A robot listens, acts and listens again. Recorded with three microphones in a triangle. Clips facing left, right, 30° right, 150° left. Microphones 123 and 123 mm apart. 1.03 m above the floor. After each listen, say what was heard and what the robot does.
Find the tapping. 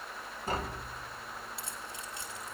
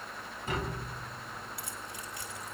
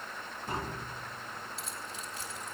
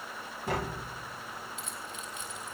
The tapping: 145° left. Turn 145° left.
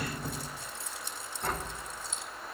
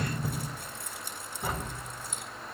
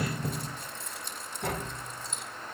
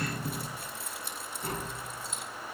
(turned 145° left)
Found it: tapping, straight ahead.